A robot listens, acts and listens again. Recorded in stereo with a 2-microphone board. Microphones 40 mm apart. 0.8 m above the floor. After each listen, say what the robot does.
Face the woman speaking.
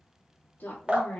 Turn 55° left.
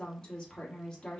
Turn 20° left.
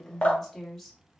Facing the woman speaking.